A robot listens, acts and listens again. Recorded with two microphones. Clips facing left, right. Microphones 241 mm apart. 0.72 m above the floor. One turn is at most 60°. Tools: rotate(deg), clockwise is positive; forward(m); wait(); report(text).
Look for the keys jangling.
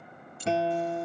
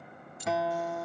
rotate(-35)
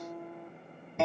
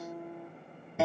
wait()
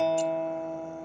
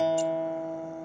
wait()
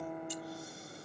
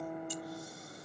report("I heard keys jangling, but can't make it out now. It was about straight ahead or 110° left.")